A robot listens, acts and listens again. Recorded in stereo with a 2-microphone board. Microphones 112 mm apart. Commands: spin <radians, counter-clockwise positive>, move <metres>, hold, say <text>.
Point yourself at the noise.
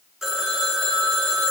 spin -0.52
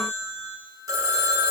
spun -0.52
spin -2.53
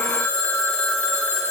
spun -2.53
spin 0.17
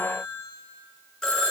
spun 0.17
say Found it: a phone ringing, straight ahead.